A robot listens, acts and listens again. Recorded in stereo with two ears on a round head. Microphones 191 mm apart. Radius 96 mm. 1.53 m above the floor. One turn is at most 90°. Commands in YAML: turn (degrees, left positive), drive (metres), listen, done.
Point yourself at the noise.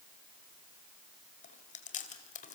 turn: 40
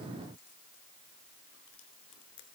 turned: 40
turn: 90
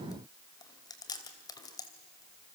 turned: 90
turn: 20
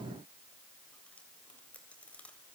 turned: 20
done: "Facing the chewing."